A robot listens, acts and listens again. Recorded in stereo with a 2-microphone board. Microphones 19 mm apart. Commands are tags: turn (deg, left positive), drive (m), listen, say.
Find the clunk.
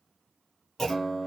<turn deg="20"/>
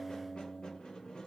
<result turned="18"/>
<listen/>
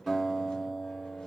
<say>I heard a clunk, but can't make it out now. It was about straight ahead or 140° left.</say>